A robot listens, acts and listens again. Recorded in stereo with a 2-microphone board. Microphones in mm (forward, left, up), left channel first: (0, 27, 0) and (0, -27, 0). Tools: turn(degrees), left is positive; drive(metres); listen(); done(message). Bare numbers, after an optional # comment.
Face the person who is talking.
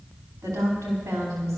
turn(-90)
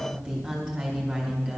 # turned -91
# So it is at 15° right.
turn(-15)
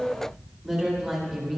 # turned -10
done("Found it: a woman speaking, straight ahead, over 4 m away.")